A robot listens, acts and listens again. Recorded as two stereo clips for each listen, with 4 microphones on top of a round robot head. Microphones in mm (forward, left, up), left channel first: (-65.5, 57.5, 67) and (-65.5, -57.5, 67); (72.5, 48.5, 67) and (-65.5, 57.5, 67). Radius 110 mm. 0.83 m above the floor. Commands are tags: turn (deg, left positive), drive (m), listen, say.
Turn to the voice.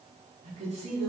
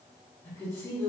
<turn deg="-75"/>
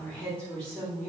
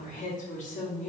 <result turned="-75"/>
<turn deg="15"/>
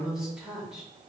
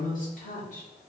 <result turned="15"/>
<say>Found it: a woman speaking, straight ahead.</say>